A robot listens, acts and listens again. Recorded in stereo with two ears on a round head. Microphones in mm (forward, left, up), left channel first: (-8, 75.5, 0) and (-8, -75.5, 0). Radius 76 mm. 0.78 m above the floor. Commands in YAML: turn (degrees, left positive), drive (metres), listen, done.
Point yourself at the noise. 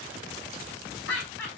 turn: 90
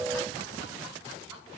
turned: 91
listen: true
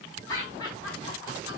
turn: 25
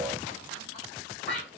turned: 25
done: "Found it: laughter, straight ahead, over 4 m away."